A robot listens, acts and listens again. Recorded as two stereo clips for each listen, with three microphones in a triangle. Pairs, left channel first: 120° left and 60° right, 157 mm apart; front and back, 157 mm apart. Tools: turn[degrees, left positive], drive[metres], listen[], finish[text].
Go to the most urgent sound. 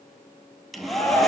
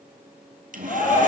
Thought: The shout: 40° left.
Action: turn[40]
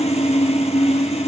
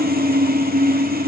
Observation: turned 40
Action: listen[]
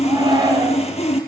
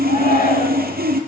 Action: drive[1.0]
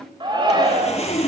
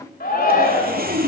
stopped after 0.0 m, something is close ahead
Action: finish[Blocked. The shout is further on, straight ahead.]